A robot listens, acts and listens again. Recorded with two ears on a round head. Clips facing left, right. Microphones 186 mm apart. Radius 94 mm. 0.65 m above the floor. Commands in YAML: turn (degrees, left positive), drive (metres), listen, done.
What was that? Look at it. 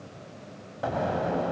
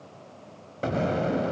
turn: -35
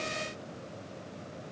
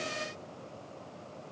listen: true
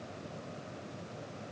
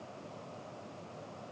done: "I heard an explosion, but can't make it out now. It was about straight ahead or 110° right."